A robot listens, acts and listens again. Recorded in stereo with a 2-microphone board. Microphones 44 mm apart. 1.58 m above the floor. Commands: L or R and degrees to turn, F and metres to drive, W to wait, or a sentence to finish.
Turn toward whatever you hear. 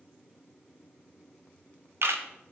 R65
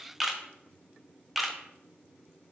Facing the camera shutter.